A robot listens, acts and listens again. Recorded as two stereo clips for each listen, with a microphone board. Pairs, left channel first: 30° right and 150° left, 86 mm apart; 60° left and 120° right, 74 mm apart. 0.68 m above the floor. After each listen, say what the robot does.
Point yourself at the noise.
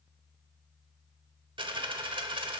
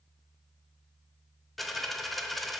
Turn 150° left.
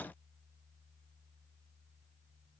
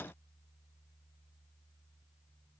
I heard a dropped coin from this way, but can't make it out now.